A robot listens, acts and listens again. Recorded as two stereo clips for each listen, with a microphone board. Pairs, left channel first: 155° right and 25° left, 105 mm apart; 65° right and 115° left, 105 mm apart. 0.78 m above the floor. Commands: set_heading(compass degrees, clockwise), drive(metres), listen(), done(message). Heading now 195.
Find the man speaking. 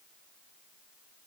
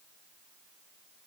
listen()
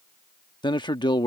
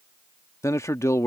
set_heading(320)
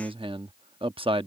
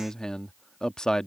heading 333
set_heading(318)
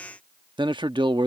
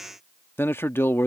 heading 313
done("Found it: a man speaking, straight ahead.")